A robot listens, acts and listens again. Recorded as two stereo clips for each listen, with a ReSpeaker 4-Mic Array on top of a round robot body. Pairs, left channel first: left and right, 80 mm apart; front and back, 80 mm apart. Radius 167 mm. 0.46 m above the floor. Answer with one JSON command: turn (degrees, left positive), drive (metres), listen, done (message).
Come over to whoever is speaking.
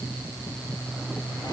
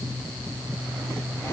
{"listen": true}
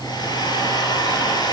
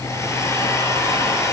{"listen": true}
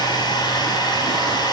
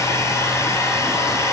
{"done": "I can't make out anyone speaking, only a hair dryer."}